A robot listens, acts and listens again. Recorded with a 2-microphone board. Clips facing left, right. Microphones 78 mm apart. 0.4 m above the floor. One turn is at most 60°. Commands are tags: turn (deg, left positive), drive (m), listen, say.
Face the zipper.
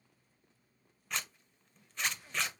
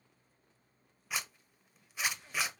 <turn deg="-30"/>
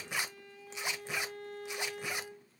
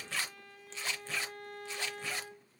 <turn deg="20"/>
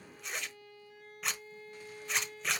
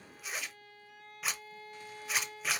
<say>Found it: a zipper, straight ahead, under 1 m away.</say>